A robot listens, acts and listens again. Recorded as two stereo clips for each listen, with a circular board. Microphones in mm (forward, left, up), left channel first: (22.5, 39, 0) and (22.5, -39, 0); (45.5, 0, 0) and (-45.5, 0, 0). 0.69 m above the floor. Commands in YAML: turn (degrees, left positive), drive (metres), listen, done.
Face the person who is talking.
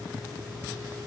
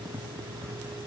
listen: true
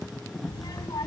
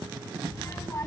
turn: 60
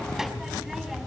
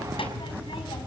done: "Found it: a child speaking, straight ahead."